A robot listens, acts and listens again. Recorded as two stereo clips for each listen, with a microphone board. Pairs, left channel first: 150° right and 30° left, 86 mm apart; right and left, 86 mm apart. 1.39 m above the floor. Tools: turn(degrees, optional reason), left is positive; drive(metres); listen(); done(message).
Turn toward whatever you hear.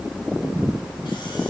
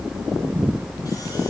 listen()
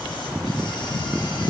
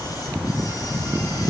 listen()
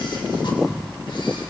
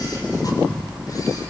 done("I can't make out anything to turn to.")